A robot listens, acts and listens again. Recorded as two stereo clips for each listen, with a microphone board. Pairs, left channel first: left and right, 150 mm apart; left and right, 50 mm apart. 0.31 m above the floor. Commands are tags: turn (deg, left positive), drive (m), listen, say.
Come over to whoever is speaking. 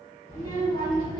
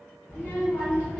<turn deg="30"/>
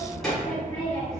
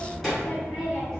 <drive m="1.0"/>
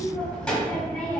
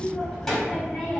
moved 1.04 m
<drive m="1.0"/>
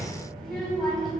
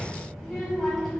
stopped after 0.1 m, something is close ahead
<say>Arrived at the child speaking, straight ahead.</say>